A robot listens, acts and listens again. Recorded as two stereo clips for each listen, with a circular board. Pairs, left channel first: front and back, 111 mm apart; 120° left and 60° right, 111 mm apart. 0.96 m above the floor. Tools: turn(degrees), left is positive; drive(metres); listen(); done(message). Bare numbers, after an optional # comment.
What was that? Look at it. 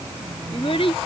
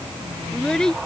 # The child speaking: 35° left.
turn(35)
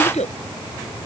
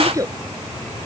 done("Found it: a child speaking, straight ahead.")